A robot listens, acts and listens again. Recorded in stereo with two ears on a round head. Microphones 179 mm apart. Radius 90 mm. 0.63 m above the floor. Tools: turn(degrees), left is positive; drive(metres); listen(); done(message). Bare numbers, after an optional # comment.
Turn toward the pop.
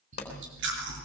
# The pop: about 35° left or 145° left.
turn(35)
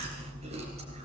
listen()
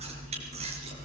done("I heard a pop, but can't make it out now. It was about straight ahead or 110° left.")